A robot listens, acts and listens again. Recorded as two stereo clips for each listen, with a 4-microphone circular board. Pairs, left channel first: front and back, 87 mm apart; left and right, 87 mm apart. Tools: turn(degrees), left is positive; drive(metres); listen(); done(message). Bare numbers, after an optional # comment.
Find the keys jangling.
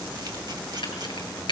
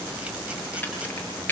# The keys jangling: 20° left.
turn(20)
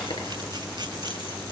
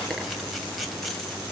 listen()
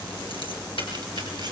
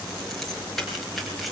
done("Found it: keys jangling, straight ahead.")